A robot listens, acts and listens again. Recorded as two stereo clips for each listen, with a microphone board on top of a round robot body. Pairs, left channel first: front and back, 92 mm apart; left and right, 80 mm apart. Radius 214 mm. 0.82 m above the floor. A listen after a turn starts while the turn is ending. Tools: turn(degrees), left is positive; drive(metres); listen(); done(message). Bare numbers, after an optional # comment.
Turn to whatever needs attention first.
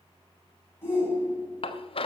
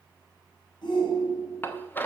# The shout: 65° left.
turn(65)
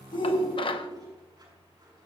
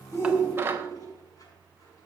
# The shout is now 15° left.
turn(15)
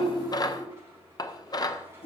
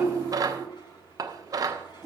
done("Found it: a shout, straight ahead, over 4 m away.")